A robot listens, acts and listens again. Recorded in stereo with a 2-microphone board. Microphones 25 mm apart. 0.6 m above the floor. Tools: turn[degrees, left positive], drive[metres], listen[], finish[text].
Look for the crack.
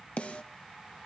Action: listen[]
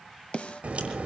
Thought: The crack: about 55° right or 125° right.
Action: turn[-55]
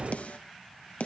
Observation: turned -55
Thought: So it is at 70° right.
Action: turn[-70]
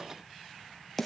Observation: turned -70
Action: finish[I heard a crack from this way, but can't make it out now.]